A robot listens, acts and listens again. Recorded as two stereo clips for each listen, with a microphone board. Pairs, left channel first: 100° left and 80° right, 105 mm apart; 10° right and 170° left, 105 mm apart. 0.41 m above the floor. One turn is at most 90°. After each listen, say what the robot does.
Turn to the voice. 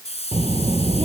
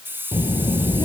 Turn 55° right.
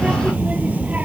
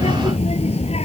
Facing the child speaking.